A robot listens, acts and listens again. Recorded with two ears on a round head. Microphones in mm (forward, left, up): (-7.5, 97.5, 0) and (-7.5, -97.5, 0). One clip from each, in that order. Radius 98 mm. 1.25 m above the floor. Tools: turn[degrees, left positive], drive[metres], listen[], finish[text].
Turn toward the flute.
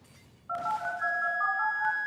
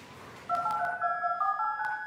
Thought: The flute: about 45° left or 135° left.
Action: turn[45]
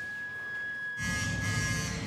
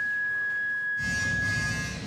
Action: finish[Found it: a flute, straight ahead, under 1 m away.]